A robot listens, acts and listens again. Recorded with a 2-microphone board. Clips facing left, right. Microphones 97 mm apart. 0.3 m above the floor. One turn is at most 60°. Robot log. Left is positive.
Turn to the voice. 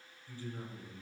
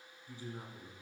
cmd yaw -30
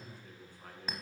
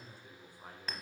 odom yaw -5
cmd yaw -30
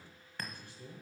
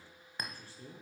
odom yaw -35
note: So it is at 145° right.
cmd yaw -60
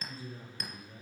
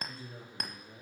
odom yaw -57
note: The man speaking is now 75° right.
cmd yaw -60
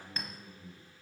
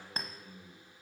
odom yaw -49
note: The man speaking is now 45° right.
cmd yaw -45
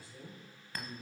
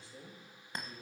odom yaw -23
note: The man speaking is now 25° right.
cmd yaw -25
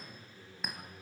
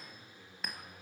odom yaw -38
note: The man speaking is now 15° left.
cmd yaw +15
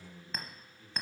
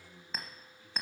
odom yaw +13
end: Found it: a man speaking, straight ahead, over 4 m away.